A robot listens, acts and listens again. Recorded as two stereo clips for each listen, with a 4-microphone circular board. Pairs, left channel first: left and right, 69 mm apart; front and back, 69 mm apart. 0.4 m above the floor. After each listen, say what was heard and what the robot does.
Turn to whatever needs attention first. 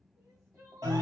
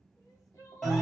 The crying: 40° right. Turn 40° right.
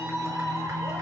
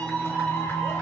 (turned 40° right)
Keep listening.
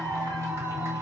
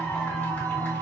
Keep listening.
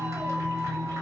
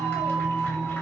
I heard crying from this way, but can't make it out now.